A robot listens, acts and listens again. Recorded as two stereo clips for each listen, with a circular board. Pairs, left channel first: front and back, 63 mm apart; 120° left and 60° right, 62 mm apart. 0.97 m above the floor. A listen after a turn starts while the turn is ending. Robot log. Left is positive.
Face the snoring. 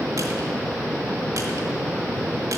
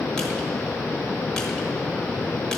cmd idle
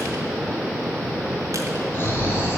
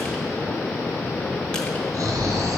note: The snoring: 50° right.
cmd yaw -50
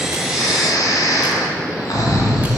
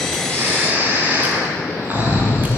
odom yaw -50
end: Facing the snoring.